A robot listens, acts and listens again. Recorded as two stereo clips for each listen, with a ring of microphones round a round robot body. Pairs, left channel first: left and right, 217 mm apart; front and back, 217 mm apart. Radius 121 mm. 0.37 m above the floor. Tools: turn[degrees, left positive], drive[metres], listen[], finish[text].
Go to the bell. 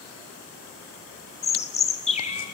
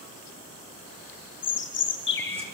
Action: listen[]
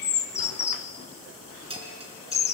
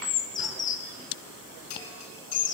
Thought: The bell: 25° right.
Action: turn[-25]
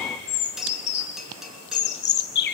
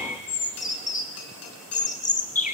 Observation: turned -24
Action: drive[1.0]
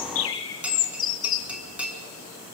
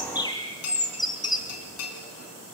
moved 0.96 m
Action: drive[1.0]
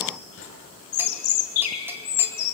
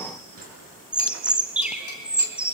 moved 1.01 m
Action: listen[]
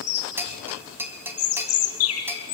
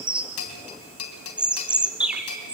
Thought: The bell is now 10° right.
Action: turn[-10]
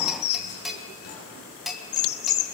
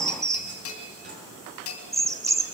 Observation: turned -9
Action: drive[1.0]
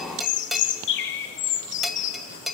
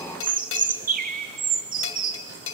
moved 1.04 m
Action: drive[1.0]
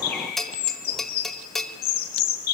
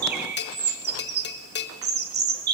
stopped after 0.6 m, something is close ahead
Action: finish[I am next to the bell.]